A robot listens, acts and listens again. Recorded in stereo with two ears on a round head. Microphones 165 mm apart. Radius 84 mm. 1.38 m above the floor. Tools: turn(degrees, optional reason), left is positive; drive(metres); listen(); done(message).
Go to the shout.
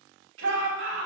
turn(degrees=-90)
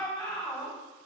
drive(metres=1.0)
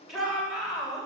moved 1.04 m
drive(metres=1.0)
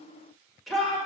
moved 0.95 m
drive(metres=1.0)
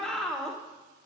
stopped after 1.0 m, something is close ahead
done("Arrived at the shout, straight ahead.")